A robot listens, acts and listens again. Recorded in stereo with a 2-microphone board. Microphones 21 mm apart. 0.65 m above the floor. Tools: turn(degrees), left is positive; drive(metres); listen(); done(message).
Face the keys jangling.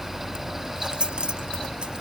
turn(degrees=-50)
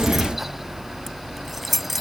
done("Found it: keys jangling, straight ahead.")